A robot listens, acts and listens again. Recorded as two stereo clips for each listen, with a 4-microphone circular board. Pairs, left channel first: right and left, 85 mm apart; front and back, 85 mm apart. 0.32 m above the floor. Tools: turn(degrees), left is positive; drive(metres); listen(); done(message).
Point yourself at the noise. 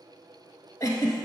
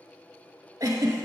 turn(degrees=-130)
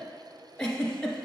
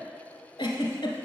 done("Found it: a giggle, straight ahead.")